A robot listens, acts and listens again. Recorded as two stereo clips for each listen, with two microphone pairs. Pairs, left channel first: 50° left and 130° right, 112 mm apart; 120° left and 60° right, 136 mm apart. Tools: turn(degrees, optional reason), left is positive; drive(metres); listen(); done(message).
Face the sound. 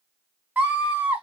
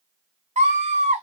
turn(degrees=-55, reason="The scream: 55° right.")
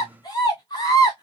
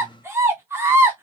done("Found it: a scream, straight ahead, 2 to 4 m away.")